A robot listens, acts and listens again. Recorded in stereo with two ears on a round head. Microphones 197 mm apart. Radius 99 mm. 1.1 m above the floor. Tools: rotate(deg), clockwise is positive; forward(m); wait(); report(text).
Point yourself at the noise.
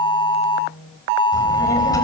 rotate(-15)
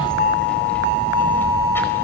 rotate(-30)
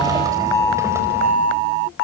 wait()
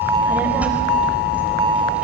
report("Found it: a child speaking, straight ahead, over 4 m away.")